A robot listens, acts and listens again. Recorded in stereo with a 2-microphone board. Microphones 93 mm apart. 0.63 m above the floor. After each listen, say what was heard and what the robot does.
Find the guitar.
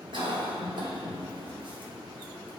Keep listening.
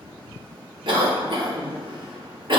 Keep listening.
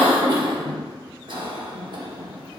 I can't make out a guitar to turn to.